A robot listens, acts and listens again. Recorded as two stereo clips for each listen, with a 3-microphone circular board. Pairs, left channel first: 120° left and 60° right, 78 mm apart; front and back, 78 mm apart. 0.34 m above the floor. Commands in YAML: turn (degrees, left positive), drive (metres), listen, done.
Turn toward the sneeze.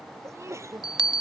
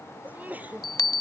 turn: -115
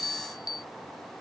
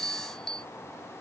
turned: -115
done: "I heard a sneeze from this way, but can't make it out now."